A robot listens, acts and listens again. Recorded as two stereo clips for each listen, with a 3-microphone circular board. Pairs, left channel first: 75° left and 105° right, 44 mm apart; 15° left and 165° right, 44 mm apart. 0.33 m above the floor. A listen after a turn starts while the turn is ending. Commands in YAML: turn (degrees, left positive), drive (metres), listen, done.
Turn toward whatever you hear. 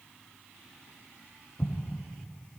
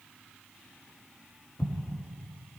turn: 35
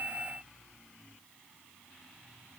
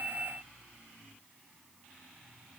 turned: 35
done: "I heard an explosion from this way, but can't make it out now."